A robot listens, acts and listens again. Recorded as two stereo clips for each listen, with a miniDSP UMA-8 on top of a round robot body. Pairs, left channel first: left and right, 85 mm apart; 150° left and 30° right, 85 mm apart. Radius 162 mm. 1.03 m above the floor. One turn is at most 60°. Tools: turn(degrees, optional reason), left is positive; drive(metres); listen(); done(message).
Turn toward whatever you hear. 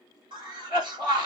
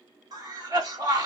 turn(degrees=-60, reason="The cough: 70° right.")
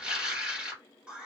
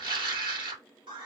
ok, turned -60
turn(degrees=-15, reason="The cough is now 15° right.")
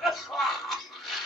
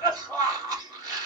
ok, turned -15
done("Found it: a cough, straight ahead, 1 to 2 m away.")